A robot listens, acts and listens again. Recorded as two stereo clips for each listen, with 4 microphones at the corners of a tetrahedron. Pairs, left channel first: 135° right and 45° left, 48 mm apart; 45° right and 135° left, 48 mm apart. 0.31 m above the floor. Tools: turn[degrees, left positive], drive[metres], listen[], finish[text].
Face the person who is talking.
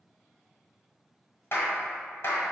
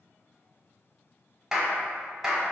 Action: listen[]
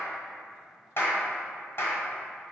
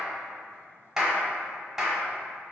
Action: listen[]
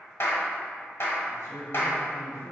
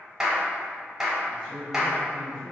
Thought: The man speaking: 120° right.
Action: turn[-120]
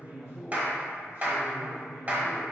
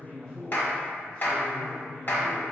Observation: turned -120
Thought: The man speaking is now 20° left.
Action: turn[20]
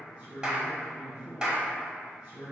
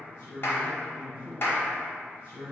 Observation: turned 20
Action: finish[Found it: a man speaking, straight ahead, 2 to 4 m away.]